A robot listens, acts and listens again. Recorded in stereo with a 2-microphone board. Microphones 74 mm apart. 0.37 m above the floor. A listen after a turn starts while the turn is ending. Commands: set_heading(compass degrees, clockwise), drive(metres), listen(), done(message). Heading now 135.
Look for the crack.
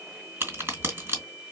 set_heading(165)
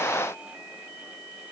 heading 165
listen()
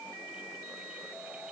done("I heard a crack, but can't make it out now. It was about straight ahead or 120° right.")